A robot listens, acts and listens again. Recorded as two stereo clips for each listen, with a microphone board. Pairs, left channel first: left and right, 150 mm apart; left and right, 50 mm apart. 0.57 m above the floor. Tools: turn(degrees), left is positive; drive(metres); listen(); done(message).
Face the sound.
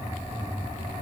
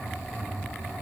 listen()
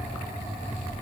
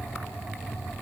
listen()
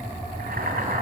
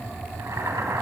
turn(degrees=-90)
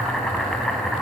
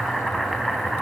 done("Facing the boiling, 2 to 4 m away.")